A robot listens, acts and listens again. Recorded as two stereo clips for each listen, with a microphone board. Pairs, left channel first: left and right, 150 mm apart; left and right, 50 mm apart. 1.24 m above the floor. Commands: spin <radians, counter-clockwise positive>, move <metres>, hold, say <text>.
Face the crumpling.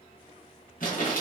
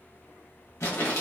spin 1.13
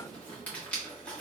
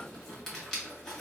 spin 0.17
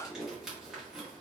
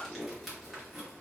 say Facing the crumpling, 1 to 2 m away.